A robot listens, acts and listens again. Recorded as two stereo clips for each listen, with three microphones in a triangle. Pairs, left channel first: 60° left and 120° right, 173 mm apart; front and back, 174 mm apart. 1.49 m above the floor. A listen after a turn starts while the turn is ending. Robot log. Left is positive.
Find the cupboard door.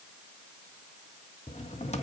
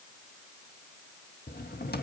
note: The cupboard door: 15° left.
cmd yaw +15
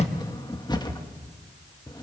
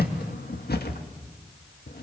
end: Found it: a cupboard door, straight ahead, 1 to 2 m away.